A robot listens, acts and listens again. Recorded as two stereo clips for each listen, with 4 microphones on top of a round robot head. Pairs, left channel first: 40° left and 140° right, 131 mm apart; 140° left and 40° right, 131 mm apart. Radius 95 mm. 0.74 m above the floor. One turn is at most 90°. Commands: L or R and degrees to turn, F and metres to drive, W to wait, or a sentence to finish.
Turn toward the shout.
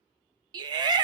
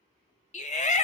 L90
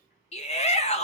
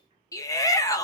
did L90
L75
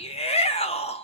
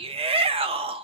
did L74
Facing the shout, 1 to 2 m away.